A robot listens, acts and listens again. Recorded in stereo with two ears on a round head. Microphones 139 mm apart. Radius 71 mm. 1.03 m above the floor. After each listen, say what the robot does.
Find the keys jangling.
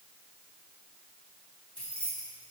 Turn 30° left.
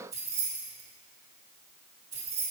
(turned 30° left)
Turn 20° right.
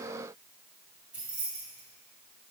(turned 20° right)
Turn 10° right.
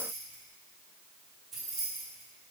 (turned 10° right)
Facing the keys jangling.